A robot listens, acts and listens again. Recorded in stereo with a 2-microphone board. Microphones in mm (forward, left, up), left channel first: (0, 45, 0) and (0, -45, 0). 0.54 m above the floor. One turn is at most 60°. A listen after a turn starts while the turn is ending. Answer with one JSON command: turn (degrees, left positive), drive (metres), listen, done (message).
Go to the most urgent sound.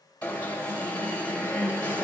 {"turn": 20}
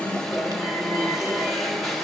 {"drive": 1.0}
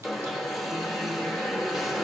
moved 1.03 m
{"drive": 1.0}
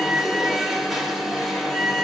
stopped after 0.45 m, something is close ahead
{"done": "I am next to the alarm."}